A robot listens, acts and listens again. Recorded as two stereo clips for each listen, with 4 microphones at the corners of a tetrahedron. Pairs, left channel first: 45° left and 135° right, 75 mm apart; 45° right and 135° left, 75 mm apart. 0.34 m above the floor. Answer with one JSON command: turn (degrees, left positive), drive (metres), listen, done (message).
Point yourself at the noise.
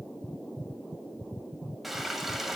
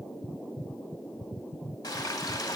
{"turn": -50}
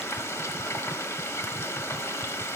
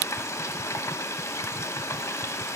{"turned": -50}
{"done": "Found it: frying, straight ahead."}